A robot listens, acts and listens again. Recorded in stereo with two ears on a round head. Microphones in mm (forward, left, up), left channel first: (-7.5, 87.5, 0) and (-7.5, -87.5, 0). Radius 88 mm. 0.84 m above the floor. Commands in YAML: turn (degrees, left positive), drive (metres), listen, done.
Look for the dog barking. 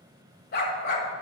turn: 55
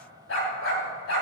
turn: 80
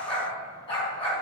turn: 30
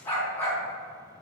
turn: 10
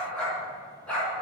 done: "Found it: a dog barking, straight ahead, 2 to 4 m away."